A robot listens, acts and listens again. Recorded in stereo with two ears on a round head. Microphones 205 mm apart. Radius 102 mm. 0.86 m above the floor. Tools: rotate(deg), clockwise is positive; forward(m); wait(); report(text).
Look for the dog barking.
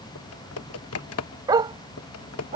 rotate(20)
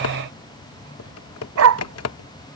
rotate(110)
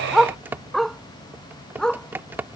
report("Found it: a dog barking, straight ahead.")